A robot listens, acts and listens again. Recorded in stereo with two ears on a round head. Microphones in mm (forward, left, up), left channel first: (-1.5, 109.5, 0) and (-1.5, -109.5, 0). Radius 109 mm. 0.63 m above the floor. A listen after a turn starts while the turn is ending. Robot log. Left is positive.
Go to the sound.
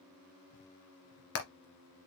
note: The hammering: about 65° left or 115° left.
cmd yaw +65
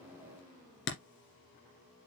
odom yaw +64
note: So it is at 50° left.
cmd yaw +50
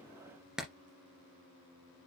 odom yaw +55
cmd fwd 1.0
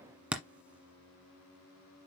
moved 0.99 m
cmd fwd 1.0
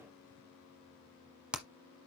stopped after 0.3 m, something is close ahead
end: I am next to the hammering.